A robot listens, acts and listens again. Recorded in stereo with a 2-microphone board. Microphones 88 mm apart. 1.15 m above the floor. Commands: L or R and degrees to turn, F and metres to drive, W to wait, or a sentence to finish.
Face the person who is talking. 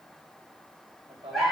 R90
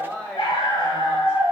L15
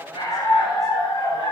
W
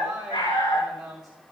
Facing the woman speaking, over 4 m away.